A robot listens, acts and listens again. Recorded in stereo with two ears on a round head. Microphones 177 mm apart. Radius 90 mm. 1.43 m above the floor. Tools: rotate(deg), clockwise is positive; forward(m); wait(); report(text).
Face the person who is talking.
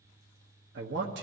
rotate(60)
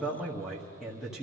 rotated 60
report("Facing the man speaking.")